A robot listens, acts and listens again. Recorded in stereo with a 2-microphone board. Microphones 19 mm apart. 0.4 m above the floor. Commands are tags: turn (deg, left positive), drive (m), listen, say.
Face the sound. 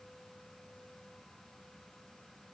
<listen/>
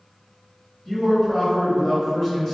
<turn deg="30"/>
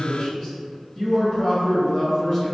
<turn deg="140"/>
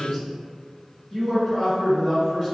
<turn deg="45"/>
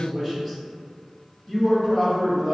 <say>Facing the man speaking.</say>